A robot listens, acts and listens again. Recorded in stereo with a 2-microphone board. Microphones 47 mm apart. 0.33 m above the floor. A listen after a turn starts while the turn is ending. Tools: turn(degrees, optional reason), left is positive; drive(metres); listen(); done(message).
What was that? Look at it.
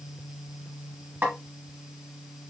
turn(degrees=-35, reason="The snare drum: about 35° right or 145° right.")
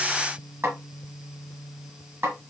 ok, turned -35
turn(degrees=-105, reason="So it is at 105° right.")
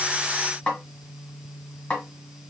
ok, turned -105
turn(degrees=25, reason="The snare drum is now 25° left.")
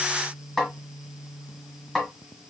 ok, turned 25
done("Facing the snare drum.")